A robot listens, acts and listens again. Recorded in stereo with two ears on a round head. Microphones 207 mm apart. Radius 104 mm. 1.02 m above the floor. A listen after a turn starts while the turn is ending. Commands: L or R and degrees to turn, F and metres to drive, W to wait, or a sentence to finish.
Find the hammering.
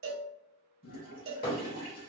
L40
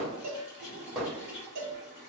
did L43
Facing the hammering.